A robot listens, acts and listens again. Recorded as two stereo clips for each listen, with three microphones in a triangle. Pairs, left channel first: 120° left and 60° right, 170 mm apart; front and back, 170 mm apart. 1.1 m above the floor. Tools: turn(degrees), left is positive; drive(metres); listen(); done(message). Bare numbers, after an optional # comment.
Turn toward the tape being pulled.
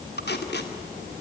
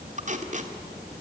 # The tape being pulled: 135° left.
turn(135)
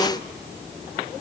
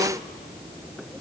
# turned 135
listen()
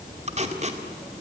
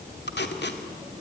# The tape being pulled is now 10° right.
turn(-10)
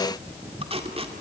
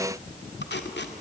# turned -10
done("Facing the tape being pulled.")